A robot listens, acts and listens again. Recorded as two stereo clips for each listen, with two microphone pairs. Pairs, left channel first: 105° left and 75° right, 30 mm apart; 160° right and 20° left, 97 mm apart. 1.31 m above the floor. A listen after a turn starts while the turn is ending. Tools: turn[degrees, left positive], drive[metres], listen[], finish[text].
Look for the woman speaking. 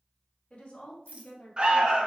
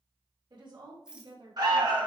Thought: The woman speaking: 55° left.
Action: turn[55]
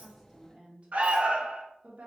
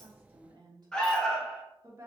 Thought: The woman speaking is now 40° right.
Action: turn[-40]
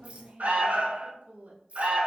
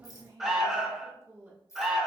Thought: The woman speaking is now 50° right.
Action: turn[-50]
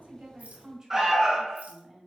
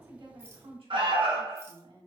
Action: finish[Facing the woman speaking, 1 to 2 m away.]